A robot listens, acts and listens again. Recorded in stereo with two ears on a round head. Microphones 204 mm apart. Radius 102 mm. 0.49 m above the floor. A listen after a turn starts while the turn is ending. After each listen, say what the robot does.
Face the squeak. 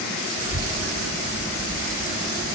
Keep listening.
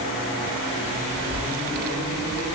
Keep listening.
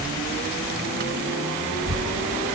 I can't make out a squeak, only a child speaking.